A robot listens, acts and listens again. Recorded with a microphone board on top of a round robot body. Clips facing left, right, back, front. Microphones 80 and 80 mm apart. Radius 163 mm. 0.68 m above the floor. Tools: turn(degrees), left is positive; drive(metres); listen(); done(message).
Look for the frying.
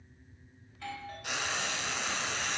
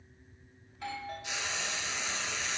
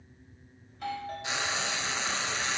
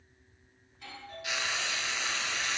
turn(degrees=120)
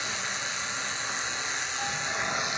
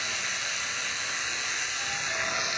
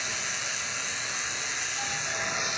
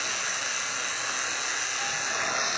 turn(degrees=30)
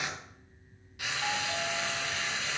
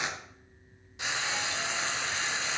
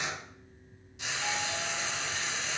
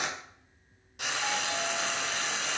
turn(degrees=-25)
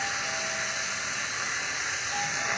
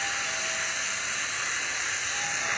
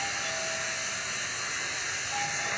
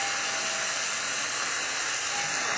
turn(degrees=10)
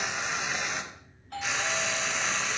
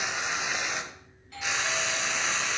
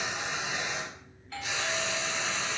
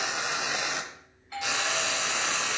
done("Facing the frying.")